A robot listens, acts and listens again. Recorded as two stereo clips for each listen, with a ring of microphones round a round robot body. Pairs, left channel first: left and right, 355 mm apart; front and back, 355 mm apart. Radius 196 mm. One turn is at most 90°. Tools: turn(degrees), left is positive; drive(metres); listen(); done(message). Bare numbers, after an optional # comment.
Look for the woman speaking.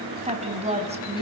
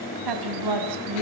# The woman speaking: 160° right.
turn(-90)
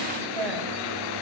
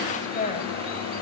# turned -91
# The woman speaking is now 70° right.
turn(-70)
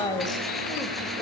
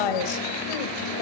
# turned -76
# The woman speaking is now 10° left.
turn(10)
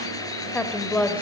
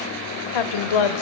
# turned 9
done("Facing the woman speaking, 2 to 4 m away.")